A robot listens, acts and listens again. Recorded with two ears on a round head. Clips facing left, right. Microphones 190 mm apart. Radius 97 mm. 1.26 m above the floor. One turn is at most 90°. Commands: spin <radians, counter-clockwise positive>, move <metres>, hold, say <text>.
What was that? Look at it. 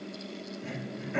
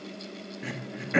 spin -1.57
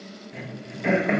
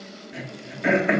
spin -0.17
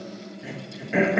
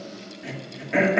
say Found it: throat clearing, straight ahead.